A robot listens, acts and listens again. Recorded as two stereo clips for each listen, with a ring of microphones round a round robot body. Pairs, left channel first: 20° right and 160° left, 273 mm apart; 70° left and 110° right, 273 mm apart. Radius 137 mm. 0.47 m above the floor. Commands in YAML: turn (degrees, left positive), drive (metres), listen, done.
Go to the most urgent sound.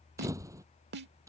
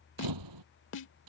listen: true
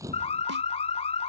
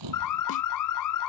turn: 45
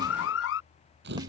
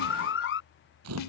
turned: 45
turn: 20
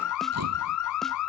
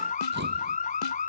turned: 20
drive: 1.0
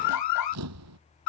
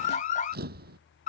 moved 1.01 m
drive: 1.0
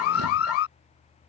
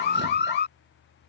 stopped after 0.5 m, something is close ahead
turn: 15
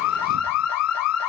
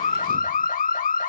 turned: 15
done: "Arrived at the alarm, straight ahead."